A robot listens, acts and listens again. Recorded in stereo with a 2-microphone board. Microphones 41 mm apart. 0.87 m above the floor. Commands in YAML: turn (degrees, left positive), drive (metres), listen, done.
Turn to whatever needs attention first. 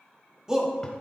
turn: -15
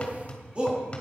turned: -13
turn: -150
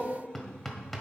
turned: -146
listen: true
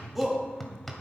done: "Facing the shout."